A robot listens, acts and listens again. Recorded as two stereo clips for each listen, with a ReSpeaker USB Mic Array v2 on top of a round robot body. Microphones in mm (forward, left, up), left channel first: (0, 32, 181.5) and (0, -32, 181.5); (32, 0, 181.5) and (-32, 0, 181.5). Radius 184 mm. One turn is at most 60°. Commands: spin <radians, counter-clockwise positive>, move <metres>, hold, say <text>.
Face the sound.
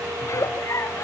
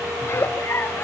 spin 0.87
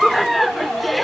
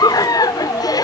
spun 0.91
say Found it: a giggle, straight ahead.